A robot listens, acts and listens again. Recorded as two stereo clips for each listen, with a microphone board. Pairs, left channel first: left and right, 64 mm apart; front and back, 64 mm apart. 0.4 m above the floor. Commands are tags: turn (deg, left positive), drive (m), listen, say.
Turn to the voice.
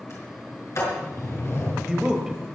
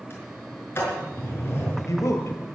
<turn deg="-10"/>
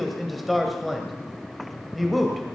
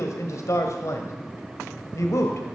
<say>Facing the man speaking.</say>